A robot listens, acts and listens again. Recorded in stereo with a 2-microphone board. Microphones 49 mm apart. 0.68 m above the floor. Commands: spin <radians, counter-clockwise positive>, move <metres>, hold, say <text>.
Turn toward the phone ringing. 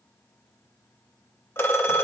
spin 0.96
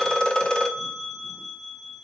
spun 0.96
spin 0.26
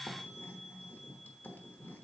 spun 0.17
hold
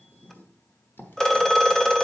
spin 0.17
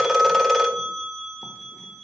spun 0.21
say Found it: a phone ringing, straight ahead.